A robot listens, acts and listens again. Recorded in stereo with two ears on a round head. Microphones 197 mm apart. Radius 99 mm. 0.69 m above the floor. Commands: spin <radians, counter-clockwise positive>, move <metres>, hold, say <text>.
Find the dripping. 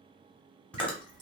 spin -0.35
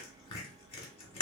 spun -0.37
hold
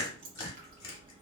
spin -2.36
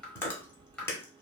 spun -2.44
say Found it: dripping, straight ahead.